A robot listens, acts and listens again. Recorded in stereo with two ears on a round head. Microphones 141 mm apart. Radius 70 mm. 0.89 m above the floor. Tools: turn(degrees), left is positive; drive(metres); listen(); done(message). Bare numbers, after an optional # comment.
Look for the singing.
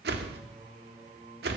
# The singing: about 45° right or 135° right.
turn(-45)
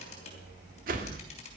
listen()
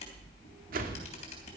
listen()
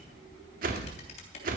done("I heard singing, but can't make it out now. It was about straight ahead or 90° right.")